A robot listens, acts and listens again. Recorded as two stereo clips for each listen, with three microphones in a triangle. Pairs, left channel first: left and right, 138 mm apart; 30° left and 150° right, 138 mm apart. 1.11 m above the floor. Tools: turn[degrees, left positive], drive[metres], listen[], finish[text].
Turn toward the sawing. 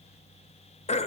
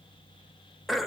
Action: listen[]
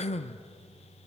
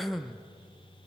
Action: listen[]
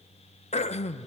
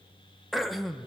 Action: finish[I can't make out sawing to turn to.]